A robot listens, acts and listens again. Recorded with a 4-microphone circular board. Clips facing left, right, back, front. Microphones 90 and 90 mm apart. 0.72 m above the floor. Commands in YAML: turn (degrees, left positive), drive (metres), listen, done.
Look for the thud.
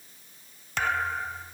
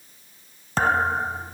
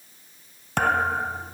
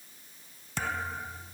turn: -145
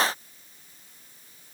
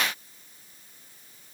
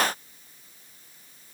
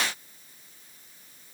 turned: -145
done: "I heard a thud from this way, but can't make it out now."